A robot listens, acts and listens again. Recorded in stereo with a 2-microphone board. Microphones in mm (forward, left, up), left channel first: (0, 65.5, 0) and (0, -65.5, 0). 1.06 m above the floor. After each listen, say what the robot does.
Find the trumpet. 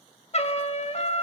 Turn 55° left.
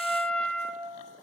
Turn 10° left.
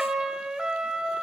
Found it: a trumpet, straight ahead, 1 to 2 m away.